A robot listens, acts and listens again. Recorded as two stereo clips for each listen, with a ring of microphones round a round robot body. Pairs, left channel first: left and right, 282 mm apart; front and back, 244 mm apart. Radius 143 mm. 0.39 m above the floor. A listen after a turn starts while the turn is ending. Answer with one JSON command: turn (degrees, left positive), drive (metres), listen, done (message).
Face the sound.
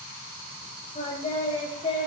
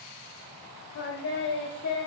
{"turn": 25}
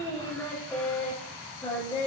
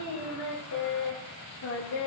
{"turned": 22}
{"turn": 10}
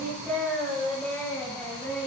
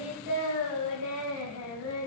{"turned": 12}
{"done": "Found it: singing, straight ahead."}